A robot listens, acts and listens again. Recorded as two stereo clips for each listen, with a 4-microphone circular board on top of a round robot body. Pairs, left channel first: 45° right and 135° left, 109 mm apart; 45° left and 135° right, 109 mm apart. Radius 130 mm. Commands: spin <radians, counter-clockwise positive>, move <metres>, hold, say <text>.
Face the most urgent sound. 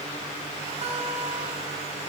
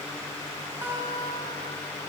hold
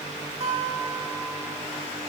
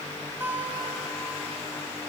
hold
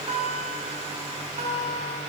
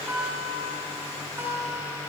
say I can't make out anything urgent, only a guitar.